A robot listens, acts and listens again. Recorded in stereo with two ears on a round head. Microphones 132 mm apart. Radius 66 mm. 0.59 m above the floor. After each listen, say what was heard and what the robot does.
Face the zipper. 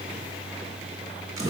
Keep listening.
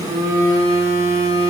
Keep listening.
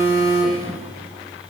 I can't make out a zipper, only a phone buzzing.